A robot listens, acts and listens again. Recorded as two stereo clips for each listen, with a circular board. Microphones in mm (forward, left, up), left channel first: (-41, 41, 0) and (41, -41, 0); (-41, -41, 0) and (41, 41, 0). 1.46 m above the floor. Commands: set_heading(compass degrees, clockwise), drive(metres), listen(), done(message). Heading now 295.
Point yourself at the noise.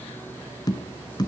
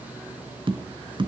set_heading(210)
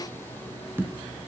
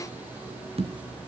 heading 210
set_heading(185)
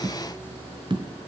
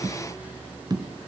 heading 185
done("Facing the tapping.")